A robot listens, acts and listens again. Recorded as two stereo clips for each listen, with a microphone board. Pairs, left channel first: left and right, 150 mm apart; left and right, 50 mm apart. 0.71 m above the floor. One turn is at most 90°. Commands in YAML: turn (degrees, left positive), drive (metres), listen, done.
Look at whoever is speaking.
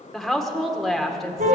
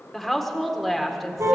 turn: 30
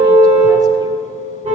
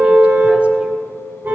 listen: true
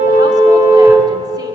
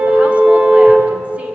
listen: true
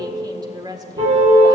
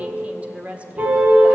turn: -30
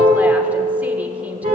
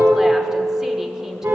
listen: true
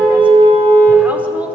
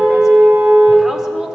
listen: true
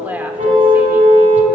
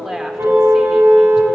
turn: -10
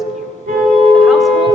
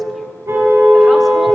listen: true
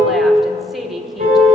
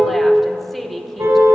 listen: true
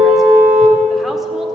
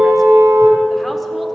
done: "Facing where the woman speaking came from. I can't hear it now."